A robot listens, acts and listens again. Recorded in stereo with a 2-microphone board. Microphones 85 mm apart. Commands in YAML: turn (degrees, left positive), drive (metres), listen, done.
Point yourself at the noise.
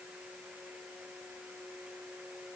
listen: true
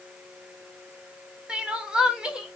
turn: -30
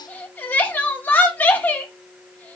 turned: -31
turn: 20
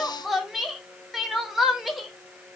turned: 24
done: "Found it: crying, straight ahead, 1 to 2 m away."